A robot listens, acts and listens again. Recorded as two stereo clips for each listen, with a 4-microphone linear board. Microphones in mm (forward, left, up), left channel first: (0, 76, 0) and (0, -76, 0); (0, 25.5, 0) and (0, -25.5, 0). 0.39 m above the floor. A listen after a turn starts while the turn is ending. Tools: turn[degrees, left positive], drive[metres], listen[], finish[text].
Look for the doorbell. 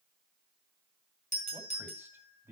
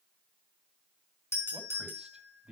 Thought: The doorbell: about 55° left or 125° left.
Action: turn[55]
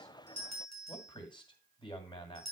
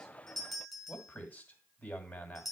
Action: finish[Found it: a doorbell, straight ahead, over 4 m away.]